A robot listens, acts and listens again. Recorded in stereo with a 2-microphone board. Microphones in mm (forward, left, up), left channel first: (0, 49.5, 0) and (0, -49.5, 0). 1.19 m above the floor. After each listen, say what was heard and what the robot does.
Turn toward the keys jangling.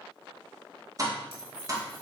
The keys jangling: about 70° right or 110° right. Turn 70° right.
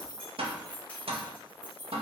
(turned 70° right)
So it is at 20° left. Turn 20° left.
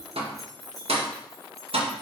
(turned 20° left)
Facing the keys jangling, over 4 m away.